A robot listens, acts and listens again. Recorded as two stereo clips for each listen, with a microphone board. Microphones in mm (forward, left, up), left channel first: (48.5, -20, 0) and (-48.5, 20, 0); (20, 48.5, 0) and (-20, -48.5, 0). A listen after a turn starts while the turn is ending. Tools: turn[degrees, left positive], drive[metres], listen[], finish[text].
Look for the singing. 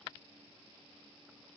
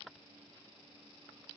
Action: listen[]
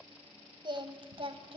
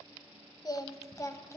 Thought: The singing: 130° left.
Action: turn[130]
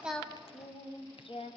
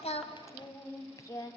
Thought: The singing is now 10° left.
Action: turn[10]
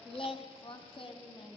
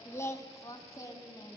Thought: The singing is now 10° left.
Action: turn[10]
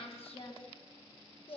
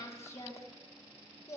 Action: finish[Facing the singing.]